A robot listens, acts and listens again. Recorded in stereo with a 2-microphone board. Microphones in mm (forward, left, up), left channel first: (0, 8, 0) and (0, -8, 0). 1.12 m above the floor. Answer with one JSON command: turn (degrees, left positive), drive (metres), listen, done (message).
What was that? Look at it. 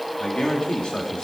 {"turn": 90}
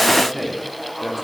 {"done": "Found it: a man speaking, straight ahead, 2 to 4 m away."}